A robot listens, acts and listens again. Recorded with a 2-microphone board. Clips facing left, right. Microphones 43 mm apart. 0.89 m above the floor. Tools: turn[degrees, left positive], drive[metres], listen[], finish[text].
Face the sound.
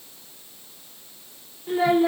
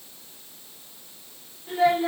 Action: turn[30]
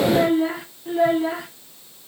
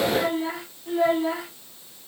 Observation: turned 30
Action: turn[30]
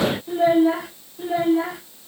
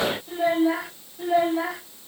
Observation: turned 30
Action: turn[30]
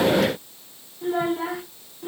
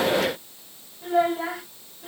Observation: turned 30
Thought: So it is at 155° left.
Action: turn[155]
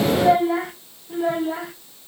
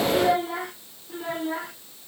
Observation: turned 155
Action: finish[Facing the child speaking.]